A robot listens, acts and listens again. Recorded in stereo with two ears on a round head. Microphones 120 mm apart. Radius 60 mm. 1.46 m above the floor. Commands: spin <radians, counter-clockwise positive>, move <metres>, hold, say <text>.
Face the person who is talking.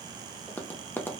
hold
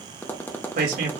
spin -1.31
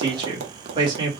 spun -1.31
spin -0.52
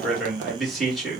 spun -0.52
say Facing the man speaking.